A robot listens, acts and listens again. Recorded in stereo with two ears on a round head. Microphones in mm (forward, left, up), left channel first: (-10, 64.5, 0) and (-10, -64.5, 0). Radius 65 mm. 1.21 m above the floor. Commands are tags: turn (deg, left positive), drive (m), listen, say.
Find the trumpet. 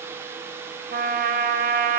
<turn deg="-60"/>
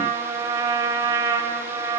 <turn deg="-25"/>
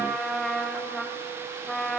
<say>Found it: a trumpet, straight ahead.</say>